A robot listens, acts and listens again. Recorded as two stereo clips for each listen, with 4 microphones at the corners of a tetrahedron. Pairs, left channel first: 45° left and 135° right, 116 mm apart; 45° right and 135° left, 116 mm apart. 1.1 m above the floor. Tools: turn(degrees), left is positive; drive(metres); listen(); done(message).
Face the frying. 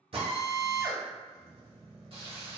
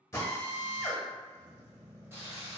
turn(degrees=-160)
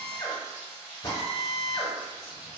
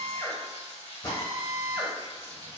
turn(degrees=-55)
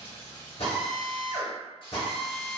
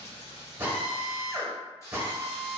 turn(degrees=10)
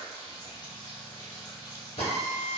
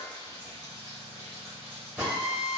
done("Found it: frying, straight ahead.")